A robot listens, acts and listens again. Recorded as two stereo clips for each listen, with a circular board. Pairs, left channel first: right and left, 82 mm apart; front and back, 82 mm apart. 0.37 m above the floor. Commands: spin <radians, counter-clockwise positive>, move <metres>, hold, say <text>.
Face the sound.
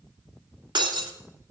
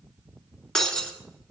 spin 1.40
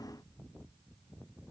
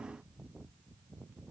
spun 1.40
say Facing where the breaking glass came from. I can't hear it now.